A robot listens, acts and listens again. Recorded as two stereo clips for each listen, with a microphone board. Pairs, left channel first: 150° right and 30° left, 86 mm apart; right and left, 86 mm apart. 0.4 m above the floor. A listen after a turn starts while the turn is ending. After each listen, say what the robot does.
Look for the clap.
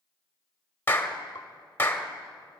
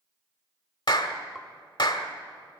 Turn 90° right.
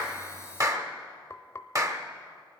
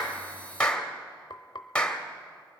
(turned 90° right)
Turn 15° right.
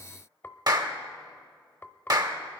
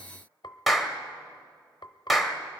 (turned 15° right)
Facing the clap, 1 to 2 m away.